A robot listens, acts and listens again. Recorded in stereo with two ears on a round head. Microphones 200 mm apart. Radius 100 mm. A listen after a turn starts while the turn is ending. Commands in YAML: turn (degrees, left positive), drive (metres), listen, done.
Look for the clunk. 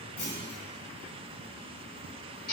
turn: 90
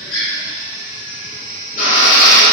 done: "I heard a clunk from this way, but can't make it out now."